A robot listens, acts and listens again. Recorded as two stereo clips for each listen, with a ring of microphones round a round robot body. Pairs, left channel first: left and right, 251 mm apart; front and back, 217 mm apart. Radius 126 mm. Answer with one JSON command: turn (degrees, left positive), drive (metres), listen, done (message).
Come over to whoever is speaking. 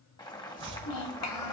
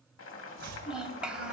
{"turn": 95}
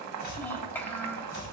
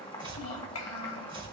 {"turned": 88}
{"drive": 1.0}
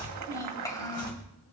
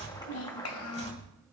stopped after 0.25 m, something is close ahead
{"turn": 10}
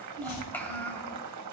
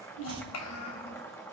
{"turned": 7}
{"done": "Blocked. The child speaking is further on, straight ahead."}